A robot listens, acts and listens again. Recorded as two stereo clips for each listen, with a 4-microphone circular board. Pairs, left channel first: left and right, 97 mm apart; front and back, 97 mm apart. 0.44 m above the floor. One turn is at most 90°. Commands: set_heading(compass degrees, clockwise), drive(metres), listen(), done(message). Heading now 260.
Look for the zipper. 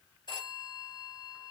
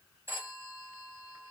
listen()
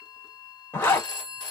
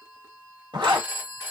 set_heading(170)
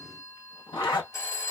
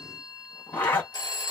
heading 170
set_heading(100)
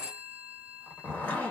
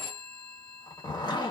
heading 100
set_heading(80)
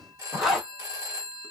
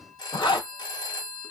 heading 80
done("Facing the zipper.")